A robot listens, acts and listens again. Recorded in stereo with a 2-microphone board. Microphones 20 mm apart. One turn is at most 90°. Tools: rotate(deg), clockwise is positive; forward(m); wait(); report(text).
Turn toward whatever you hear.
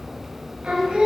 rotate(75)
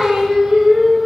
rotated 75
rotate(50)
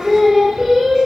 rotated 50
rotate(25)
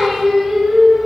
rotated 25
rotate(25)
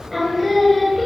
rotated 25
report("Found it: singing, straight ahead, 1 to 2 m away.")